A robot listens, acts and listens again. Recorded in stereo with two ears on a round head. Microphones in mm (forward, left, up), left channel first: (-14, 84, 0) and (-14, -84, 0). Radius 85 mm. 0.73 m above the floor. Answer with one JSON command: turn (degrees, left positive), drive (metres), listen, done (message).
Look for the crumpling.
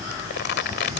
{"turn": 60}
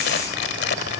{"turn": 55}
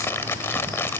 {"turn": 15}
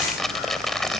{"done": "Found it: crumpling, straight ahead."}